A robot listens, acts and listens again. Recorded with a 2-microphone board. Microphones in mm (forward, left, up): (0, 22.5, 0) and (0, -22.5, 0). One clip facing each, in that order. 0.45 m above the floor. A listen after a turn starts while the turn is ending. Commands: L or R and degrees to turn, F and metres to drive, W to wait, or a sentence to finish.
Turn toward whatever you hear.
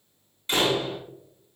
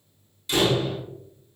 L35
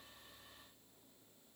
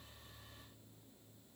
W
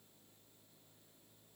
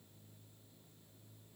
I heard a door slam, but can't make it out now. It was about straight ahead or 110° left.